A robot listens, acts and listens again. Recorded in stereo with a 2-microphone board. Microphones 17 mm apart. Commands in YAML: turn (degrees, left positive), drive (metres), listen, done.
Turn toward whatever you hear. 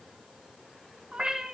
turn: -70
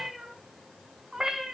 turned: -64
turn: -25
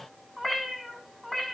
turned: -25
turn: 20
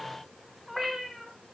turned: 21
turn: 15
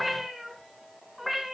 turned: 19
done: "Found it: a cat meowing, straight ahead."